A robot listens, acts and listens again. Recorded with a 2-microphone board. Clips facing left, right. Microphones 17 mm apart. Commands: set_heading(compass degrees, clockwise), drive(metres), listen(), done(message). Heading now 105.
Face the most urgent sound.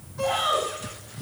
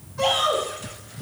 set_heading(195)
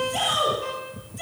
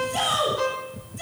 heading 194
done("Facing the shout, over 4 m away.")